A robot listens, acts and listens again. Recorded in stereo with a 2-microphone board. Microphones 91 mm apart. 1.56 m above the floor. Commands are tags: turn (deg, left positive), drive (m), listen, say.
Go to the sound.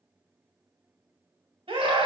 <turn deg="-90"/>
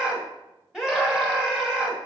<drive m="1.0"/>
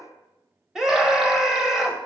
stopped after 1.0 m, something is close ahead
<say>I am next to the scream.</say>